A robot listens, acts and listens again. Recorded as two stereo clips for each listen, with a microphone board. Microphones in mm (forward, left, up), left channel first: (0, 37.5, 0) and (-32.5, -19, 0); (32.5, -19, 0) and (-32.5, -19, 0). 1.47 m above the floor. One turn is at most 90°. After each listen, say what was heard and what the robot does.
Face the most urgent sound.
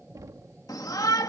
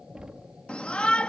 The shout: 70° left. Turn 70° left.
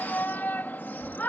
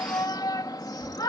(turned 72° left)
Facing the shout.